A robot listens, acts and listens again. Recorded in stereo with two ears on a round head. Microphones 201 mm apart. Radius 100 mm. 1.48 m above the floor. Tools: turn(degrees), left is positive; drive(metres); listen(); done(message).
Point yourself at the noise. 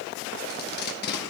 turn(degrees=50)
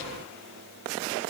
listen()
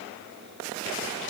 listen()
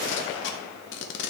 turn(degrees=70)
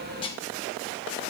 turn(degrees=25)
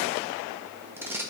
turn(degrees=-10)
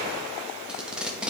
done("Facing the tape being pulled.")